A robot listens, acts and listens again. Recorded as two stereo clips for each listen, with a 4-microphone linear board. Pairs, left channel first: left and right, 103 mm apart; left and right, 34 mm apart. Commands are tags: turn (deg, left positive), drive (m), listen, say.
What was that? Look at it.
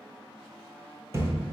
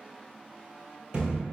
<turn deg="-30"/>
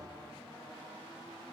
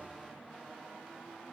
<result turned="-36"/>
<listen/>
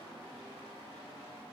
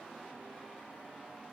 <say>I heard a thud, but can't make it out now. It was about 5° left or 115° right.</say>